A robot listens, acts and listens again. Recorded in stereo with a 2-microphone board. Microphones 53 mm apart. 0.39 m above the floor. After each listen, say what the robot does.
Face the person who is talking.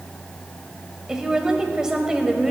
Turn 30° right.
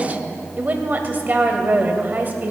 Turn 135° right.
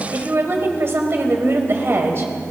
Turn 70° right.
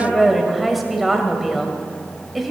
Found it: a woman speaking, straight ahead, 2 to 4 m away.